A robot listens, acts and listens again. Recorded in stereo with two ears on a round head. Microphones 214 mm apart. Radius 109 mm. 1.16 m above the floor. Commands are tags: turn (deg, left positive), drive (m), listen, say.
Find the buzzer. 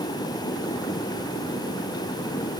<listen/>
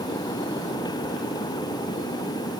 <listen/>
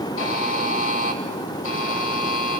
<turn deg="60"/>
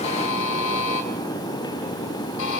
<turn deg="55"/>
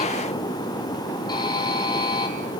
<turn deg="15"/>
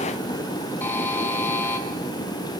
<turn deg="10"/>
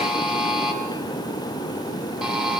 <say>Facing the buzzer.</say>